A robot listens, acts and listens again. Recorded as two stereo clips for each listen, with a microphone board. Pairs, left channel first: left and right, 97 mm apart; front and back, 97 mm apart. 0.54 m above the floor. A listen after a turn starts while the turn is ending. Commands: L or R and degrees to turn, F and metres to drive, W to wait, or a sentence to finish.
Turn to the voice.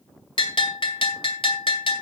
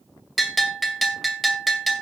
W
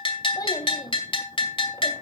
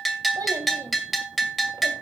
L135
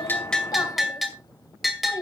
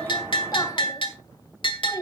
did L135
L45
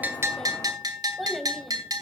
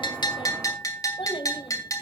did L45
Facing the child speaking, 2 to 4 m away.